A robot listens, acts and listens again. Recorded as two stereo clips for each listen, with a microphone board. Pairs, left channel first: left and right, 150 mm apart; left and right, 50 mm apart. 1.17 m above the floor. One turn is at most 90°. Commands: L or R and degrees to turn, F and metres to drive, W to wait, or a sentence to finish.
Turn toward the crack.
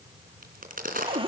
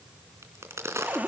R65
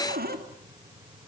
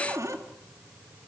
W
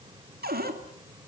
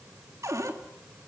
I heard a crack, but can't make it out now. It was about straight ahead or 50° right.